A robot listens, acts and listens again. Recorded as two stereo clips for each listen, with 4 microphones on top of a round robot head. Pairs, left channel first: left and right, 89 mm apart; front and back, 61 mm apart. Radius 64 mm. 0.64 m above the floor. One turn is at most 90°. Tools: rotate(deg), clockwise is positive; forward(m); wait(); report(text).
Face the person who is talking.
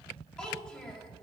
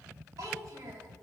rotate(-90)
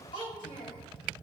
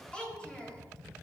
rotate(-70)
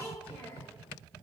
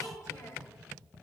rotate(-25)
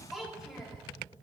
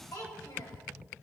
report("Found it: a child speaking, straight ahead, 2 to 4 m away.")